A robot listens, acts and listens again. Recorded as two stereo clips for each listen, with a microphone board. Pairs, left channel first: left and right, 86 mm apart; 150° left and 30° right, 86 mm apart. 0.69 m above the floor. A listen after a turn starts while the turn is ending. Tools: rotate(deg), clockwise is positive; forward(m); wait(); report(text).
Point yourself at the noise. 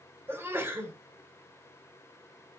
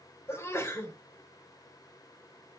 rotate(150)
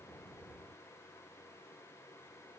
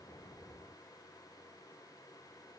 report("I heard a sneeze from this way, but can't make it out now.")